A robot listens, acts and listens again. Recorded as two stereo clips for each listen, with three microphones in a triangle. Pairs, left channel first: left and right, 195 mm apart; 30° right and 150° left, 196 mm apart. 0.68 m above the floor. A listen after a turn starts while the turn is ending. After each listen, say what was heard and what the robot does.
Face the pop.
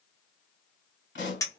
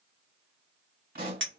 The pop: 110° left. Turn 110° left.
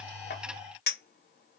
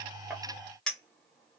Facing where the pop came from. I can't hear it now.